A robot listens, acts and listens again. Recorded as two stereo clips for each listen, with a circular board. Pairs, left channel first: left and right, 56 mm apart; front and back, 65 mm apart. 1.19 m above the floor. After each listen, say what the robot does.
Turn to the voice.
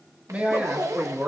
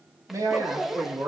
Turn 150° right.
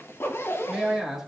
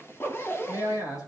Turn 10° right.
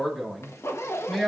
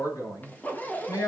Found it: a man speaking, straight ahead.